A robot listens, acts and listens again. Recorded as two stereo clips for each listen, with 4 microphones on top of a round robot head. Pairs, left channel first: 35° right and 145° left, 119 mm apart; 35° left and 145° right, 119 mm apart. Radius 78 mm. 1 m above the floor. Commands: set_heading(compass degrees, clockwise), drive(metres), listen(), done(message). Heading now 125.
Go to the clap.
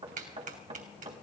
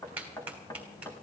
set_heading(345)
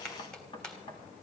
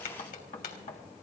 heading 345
set_heading(300)
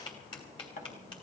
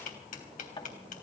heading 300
set_heading(285)
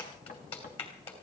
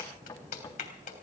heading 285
set_heading(275)
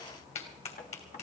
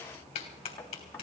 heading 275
drive(1.0)
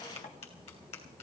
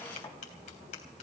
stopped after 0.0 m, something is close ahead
done("Blocked. The clap is further on, straight ahead.")